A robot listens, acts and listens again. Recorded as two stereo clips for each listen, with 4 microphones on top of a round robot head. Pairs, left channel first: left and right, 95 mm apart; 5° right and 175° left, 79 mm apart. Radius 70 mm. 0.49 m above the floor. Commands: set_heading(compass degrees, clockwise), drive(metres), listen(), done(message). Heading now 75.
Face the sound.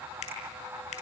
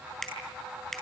set_heading(355)
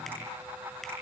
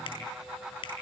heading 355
done("Facing the finger snap.")